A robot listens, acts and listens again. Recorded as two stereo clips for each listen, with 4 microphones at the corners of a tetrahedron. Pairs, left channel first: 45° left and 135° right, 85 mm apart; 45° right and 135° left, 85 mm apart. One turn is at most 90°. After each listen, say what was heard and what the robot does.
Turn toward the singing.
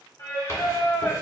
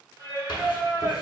The singing: 85° left. Turn 85° left.
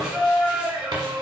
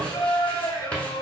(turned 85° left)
The singing is now 85° right. Turn 85° right.
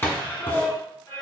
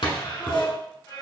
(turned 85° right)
The singing is now 20° right. Turn 20° right.
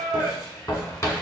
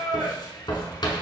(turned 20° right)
The singing is now 10° right. Turn 10° right.
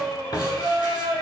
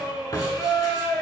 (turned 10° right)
Found it: singing, straight ahead.